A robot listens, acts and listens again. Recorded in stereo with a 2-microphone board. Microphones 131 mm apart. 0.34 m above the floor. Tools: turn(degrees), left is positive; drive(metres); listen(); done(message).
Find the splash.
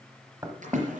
turn(degrees=-75)
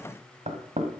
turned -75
listen()
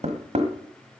done("I heard a splash, but can't make it out now. It was about straight ahead or 30° right.")